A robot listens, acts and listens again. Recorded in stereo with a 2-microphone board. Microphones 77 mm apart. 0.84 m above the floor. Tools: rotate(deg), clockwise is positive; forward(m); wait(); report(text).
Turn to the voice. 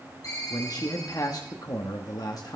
rotate(-50)
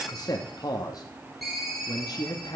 rotate(-65)
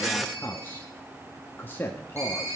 rotate(-30)
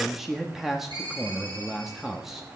report("Found it: a man speaking, straight ahead.")